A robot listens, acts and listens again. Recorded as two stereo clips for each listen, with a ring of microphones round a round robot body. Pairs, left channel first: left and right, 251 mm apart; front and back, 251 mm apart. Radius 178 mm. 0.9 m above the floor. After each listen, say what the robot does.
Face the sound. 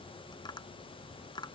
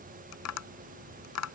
Turn 10° left.
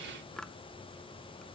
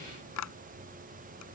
Found it: tapping, straight ahead.